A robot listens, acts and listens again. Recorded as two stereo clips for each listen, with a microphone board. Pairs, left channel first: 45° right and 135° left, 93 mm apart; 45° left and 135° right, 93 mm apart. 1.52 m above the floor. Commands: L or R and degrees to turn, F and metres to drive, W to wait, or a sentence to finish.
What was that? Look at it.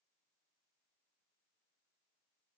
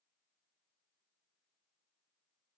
W
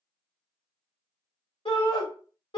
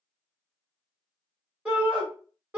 R60
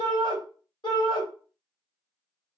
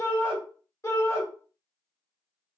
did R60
R15
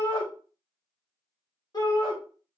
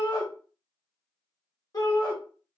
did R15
Facing the shout, 1 to 2 m away.